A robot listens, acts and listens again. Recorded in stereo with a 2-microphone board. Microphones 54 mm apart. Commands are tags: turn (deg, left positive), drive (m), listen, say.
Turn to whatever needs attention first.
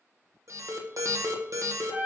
<turn deg="-70"/>
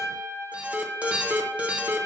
<turn deg="-25"/>
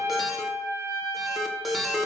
<say>Found it: an alarm, straight ahead, 1 to 2 m away.</say>